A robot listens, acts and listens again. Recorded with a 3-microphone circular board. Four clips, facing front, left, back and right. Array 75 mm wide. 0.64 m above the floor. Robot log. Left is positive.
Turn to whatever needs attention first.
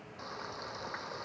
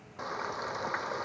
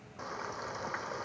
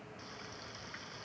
cmd idle
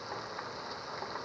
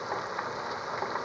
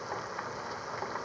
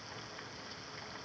cmd idle
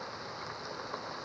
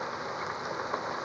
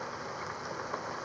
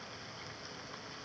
end: I can't make out anything urgent to turn to.